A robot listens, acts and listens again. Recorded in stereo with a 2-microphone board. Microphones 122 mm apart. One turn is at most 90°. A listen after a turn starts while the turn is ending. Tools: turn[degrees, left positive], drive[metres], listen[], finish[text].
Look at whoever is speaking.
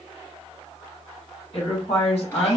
Thought: The woman speaking: about 55° left or 125° left.
Action: turn[55]
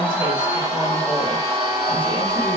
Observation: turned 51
Action: listen[]
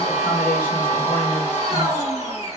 Action: listen[]
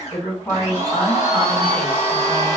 Thought: So it is at 15° left.
Action: turn[15]
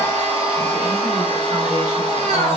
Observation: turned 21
Action: listen[]
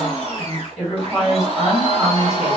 Action: finish[Found it: a woman speaking, straight ahead, 2 to 4 m away.]